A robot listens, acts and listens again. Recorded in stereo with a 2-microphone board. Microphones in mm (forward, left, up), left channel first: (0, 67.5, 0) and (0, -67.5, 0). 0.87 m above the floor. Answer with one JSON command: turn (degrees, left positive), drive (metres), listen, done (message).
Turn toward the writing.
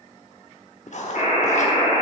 {"turn": 60}
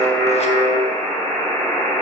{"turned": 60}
{"listen": true}
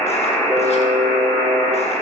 {"listen": true}
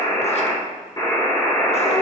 {"done": "I heard writing, but can't make it out now. It was about straight ahead or 60° left."}